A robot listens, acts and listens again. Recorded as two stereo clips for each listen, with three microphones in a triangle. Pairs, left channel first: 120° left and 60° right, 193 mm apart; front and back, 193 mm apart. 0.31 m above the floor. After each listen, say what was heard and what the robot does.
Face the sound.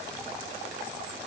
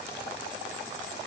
Keep listening.
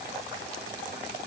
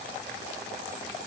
Keep listening.
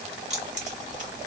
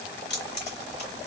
The keys jangling: 20° right. Turn 20° right.
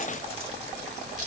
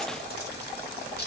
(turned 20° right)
The keys jangling is now 20° right. Turn 20° right.
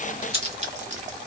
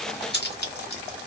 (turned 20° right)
The keys jangling is now 15° right. Turn 15° right.
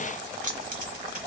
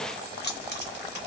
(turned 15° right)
The keys jangling is now 20° right. Turn 20° right.
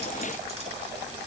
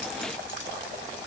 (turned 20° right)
Facing the keys jangling, 1 to 2 m away.